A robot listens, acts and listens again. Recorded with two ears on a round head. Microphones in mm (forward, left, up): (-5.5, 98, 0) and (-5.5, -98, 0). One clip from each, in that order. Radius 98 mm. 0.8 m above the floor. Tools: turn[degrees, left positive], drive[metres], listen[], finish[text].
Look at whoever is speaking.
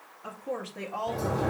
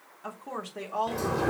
Thought: The woman speaking: about 35° right or 145° right.
Action: turn[-35]
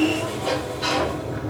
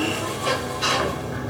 Action: listen[]
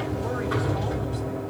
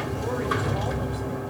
Action: listen[]
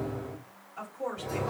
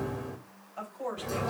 Thought: So it is at 15° right.
Action: turn[-15]
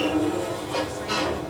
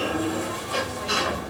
Action: listen[]
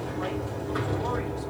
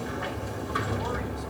Action: listen[]
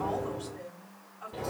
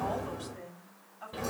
Action: finish[Found it: a woman speaking, straight ahead.]